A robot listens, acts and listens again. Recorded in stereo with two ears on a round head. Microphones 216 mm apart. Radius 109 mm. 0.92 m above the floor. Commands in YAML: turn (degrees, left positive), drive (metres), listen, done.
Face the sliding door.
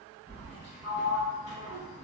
turn: -25
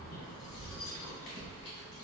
listen: true
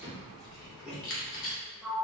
done: "Found it: a sliding door, straight ahead."